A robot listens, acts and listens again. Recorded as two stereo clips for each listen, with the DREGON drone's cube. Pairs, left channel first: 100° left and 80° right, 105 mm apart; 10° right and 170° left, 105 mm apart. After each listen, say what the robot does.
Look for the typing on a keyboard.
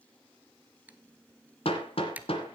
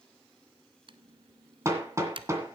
Turn 155° right.
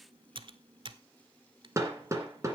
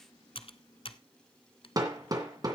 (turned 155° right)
Turn 40° right.
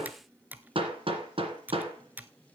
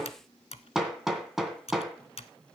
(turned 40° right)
Found it: typing on a keyboard, straight ahead, under 1 m away.